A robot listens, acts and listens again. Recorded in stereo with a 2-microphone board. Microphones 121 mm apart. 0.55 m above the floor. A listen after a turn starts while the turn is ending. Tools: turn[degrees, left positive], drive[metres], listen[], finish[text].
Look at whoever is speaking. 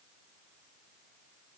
Action: listen[]
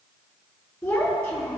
Action: turn[30]
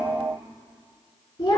Thought: So it is at 145° left.
Action: turn[145]
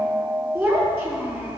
Thought: The child speaking is now 10° right.
Action: turn[-10]
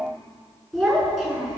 Action: finish[Facing the child speaking, over 4 m away.]